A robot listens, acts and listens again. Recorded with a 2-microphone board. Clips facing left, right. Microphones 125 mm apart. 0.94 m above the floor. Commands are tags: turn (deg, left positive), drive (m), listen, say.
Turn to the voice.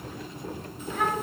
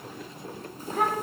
<turn deg="-40"/>
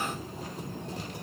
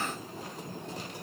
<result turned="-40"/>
<listen/>
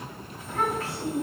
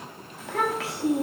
<turn deg="-95"/>
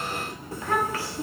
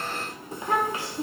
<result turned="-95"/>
<turn deg="-20"/>
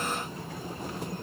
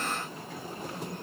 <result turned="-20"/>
<listen/>
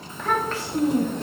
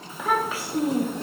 <turn deg="-10"/>
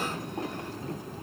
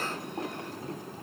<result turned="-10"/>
<listen/>
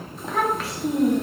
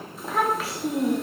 <say>Found it: a child speaking, straight ahead.</say>